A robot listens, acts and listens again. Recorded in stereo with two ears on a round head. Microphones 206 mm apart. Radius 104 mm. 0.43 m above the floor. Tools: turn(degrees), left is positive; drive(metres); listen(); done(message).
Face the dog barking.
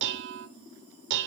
listen()
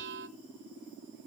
listen()
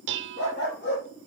turn(degrees=50)
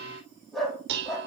done("Found it: a dog barking, straight ahead, over 4 m away.")